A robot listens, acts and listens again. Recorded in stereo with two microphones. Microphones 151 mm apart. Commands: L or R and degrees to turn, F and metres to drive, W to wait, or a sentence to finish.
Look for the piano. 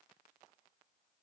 W
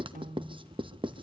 R60
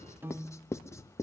R15
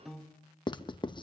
Found it: a piano, straight ahead.